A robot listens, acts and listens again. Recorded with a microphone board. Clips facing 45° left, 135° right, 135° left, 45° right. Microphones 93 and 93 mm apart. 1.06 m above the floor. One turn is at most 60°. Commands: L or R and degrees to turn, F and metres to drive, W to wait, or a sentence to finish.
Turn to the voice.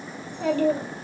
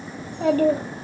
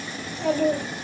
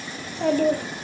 R60
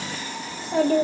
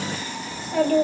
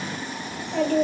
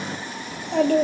R20
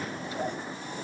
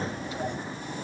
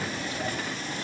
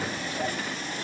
Facing the child speaking, 1 to 2 m away.